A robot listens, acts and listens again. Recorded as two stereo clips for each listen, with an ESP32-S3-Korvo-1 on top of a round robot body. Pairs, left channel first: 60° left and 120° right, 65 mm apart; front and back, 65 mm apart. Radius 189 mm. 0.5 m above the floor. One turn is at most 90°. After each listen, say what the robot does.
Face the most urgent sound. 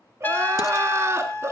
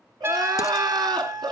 Turn 90° right.
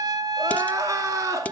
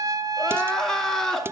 Turn 85° right.
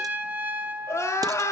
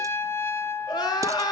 Facing the crying, 2 to 4 m away.